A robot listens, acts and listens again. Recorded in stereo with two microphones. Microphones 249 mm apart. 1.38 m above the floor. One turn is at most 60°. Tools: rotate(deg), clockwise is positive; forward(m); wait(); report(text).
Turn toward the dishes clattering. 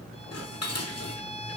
rotate(-60)
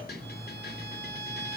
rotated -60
rotate(-40)
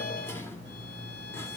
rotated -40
wait()
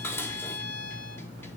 rotate(-10)
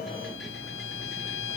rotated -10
wait()
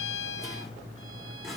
report("Facing the dishes clattering.")